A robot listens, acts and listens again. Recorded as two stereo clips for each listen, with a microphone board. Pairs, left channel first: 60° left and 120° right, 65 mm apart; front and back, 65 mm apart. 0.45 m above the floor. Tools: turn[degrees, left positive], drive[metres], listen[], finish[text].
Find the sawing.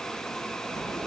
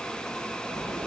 Action: listen[]
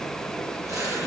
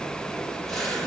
Action: listen[]
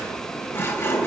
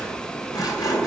Action: finish[Facing the sawing.]